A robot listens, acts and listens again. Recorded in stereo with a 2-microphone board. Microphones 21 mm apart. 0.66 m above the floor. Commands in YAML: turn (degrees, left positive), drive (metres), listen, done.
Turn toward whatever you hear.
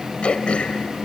turn: 90
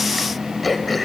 done: "Found it: throat clearing, straight ahead."